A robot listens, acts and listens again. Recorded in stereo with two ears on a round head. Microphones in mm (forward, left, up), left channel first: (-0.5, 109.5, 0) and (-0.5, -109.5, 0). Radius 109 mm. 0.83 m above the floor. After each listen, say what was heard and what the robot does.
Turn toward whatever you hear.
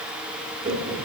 The laughter: about 30° right or 150° right. Turn 30° right.
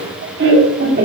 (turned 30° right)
The laughter: about 35° right or 145° right. Turn 35° right.
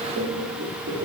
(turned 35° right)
So it is at 130° right. Turn 130° right.
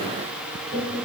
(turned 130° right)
The laughter is now 45° right. Turn 45° right.
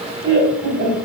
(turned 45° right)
The laughter is now 35° right. Turn 35° right.
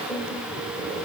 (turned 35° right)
Keep listening.
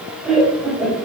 Facing the laughter, 2 to 4 m away.